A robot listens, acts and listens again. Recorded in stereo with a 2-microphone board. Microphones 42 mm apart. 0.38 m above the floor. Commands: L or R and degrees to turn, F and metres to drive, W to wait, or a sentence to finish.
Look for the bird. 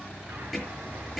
R70
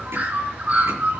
R40
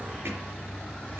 Found it: a bird, straight ahead.